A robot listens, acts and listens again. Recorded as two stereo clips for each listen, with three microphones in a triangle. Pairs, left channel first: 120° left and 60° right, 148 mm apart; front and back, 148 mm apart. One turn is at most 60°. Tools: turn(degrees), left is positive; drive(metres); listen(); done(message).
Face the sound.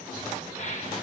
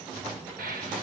turn(degrees=60)
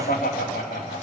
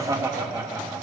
turn(degrees=60)
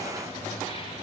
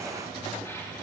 turn(degrees=50)
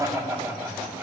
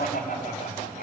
turn(degrees=15)
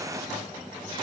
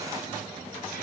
listen()
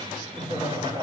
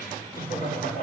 done("Found it: laughter, straight ahead.")